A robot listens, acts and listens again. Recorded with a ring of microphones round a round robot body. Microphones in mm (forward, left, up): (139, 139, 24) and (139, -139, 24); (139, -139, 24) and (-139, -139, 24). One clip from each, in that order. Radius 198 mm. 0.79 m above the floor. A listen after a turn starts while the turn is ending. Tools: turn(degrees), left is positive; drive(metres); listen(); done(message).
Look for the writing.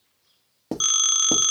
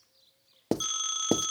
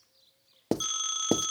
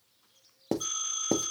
turn(degrees=-55)
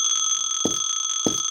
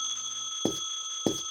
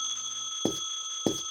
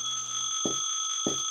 turn(degrees=10)
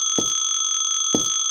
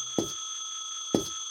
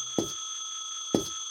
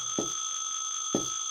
listen()
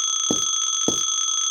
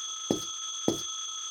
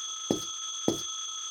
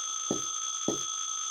done("Facing the writing.")